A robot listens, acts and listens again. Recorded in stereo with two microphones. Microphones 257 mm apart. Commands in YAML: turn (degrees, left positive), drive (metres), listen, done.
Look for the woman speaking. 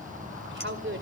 turn: -45
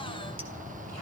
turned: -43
listen: true
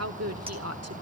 turn: -105
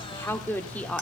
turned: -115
done: "Facing the woman speaking."